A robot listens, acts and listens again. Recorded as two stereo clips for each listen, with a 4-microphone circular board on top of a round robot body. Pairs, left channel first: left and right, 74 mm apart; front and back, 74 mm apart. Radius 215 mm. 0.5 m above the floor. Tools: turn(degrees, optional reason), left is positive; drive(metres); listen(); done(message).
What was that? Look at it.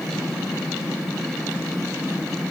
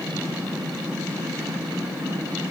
listen()
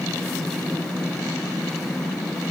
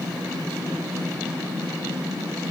listen()
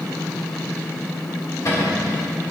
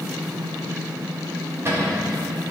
turn(degrees=130, reason="The cupboard door: 130° left.")
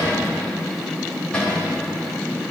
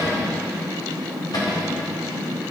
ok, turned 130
turn(degrees=15, reason="The cupboard door is now 15° left.")
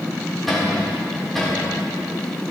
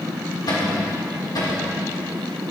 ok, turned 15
done("Found it: a cupboard door, straight ahead.")